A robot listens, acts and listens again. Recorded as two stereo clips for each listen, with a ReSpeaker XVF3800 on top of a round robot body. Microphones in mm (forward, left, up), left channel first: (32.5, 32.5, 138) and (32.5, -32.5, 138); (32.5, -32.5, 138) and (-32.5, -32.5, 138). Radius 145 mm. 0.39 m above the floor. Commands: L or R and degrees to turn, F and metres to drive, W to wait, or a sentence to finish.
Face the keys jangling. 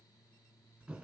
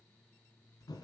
W
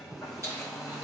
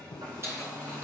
R135
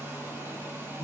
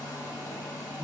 W
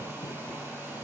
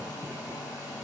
W
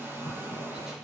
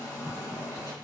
I heard keys jangling from this way, but can't make it out now.